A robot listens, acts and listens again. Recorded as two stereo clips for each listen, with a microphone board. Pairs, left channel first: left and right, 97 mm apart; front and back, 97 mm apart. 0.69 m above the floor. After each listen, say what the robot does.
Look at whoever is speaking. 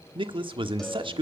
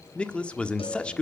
Turn 75° right.
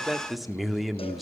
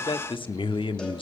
Facing the man speaking.